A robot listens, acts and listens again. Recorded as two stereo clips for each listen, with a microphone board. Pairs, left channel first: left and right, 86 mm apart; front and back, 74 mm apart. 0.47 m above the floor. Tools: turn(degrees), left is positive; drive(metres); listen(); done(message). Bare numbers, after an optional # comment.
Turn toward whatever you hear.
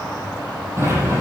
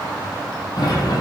# The sliding door: 30° right.
turn(-30)
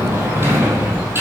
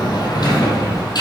# The sliding door is now 25° right.
turn(-25)
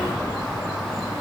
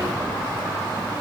listen()
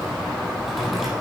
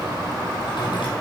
done("Found it: a sliding door, straight ahead.")